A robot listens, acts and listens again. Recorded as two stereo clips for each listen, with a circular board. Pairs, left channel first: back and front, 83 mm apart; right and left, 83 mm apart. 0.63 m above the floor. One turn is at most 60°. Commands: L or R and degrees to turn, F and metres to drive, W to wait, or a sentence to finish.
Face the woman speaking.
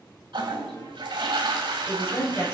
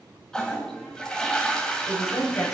R60
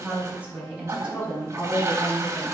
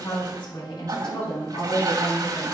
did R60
R60
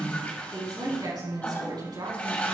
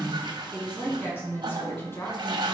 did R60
R30
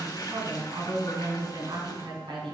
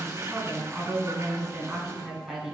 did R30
L10
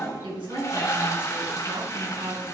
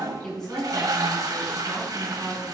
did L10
Found it: a woman speaking, straight ahead, over 4 m away.